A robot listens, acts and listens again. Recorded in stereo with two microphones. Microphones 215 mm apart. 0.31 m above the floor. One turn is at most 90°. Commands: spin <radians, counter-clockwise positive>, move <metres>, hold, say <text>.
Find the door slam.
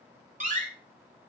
spin -0.61
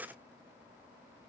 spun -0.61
hold
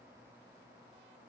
say I heard a door slam, but can't make it out now. It was about straight ahead or 110° right.